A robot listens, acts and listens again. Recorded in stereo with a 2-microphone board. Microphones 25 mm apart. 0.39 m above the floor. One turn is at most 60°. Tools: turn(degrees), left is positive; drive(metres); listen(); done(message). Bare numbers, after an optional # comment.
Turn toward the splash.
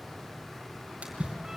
# The splash: about 55° right or 125° right.
turn(-55)
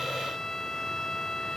listen()
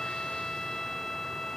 done("I heard a splash, but can't make it out now. It was about straight ahead or 70° right.")